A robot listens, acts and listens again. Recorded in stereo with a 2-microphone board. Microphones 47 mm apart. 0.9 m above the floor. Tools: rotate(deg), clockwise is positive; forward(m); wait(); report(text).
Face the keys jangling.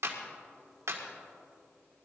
wait()
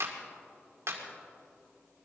wait()
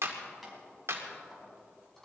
rotate(-30)
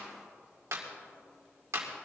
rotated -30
wait()
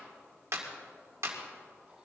wait()
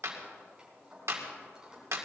rotate(15)
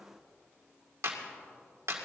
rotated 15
wait()
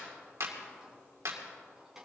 report("Facing the keys jangling.")